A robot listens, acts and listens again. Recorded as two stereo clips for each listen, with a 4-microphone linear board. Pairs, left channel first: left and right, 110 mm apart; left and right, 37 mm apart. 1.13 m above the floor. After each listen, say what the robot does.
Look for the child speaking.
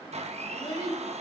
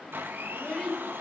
Turn 45° left.
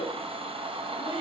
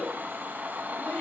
Turn 90° left.
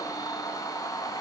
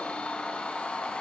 Keep listening.
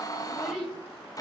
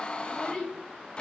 Facing the child speaking.